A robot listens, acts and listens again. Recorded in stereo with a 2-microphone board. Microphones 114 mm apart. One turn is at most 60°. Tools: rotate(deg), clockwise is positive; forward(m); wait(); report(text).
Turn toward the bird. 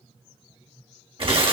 wait()
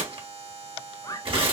rotate(-35)
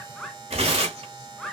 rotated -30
report("Facing the bird, under 1 m away.")